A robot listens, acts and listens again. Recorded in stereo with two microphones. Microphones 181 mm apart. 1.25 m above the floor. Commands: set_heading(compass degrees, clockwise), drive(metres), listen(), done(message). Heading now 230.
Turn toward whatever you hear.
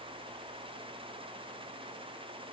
listen()
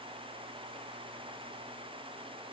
listen()
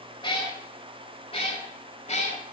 set_heading(190)
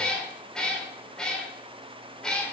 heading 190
done("Found it: a cat meowing, straight ahead, 2 to 4 m away.")